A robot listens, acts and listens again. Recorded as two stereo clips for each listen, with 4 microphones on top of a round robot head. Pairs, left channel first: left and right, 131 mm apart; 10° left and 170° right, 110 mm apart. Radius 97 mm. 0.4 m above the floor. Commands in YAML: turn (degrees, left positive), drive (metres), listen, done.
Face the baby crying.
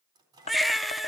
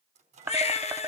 done: "Found it: a baby crying, straight ahead, 1 to 2 m away."